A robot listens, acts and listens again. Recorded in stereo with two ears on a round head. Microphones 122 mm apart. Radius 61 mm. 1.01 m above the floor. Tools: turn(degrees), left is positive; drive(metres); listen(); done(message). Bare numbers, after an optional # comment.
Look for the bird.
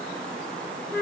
listen()
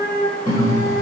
# The bird: about 60° left or 120° left.
turn(60)
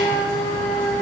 listen()
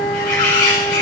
# So it is at 65° left.
turn(65)
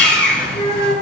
done("Found it: a bird, straight ahead, 2 to 4 m away.")